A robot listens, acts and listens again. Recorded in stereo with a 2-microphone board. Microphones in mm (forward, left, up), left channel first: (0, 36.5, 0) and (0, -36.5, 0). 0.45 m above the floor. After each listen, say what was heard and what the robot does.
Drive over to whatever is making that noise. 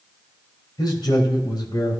The man speaking: about 60° left or 120° left. Turn 60° left.
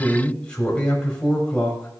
So it is at 15° left. Turn 15° left.
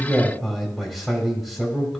Drive 1.0 m forward.
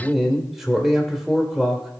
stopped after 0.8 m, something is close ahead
I am next to the man speaking.